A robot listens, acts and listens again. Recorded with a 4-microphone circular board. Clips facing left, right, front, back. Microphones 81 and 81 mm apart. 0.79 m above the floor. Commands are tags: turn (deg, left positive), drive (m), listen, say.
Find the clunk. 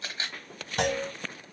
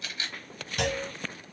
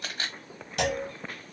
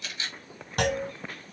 <turn deg="140"/>
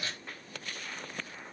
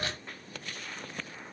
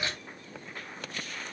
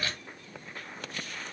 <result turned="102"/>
<turn deg="40"/>
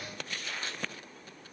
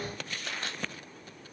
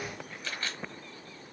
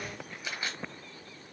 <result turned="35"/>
<say>I heard a clunk from this way, but can't make it out now.</say>